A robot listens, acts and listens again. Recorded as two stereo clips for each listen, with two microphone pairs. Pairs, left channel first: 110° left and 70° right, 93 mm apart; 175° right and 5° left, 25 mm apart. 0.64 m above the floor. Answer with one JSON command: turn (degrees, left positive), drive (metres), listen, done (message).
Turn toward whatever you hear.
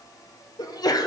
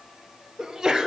{"turn": 70}
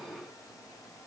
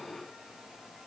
{"done": "Facing where the sneeze came from. I can't hear it now."}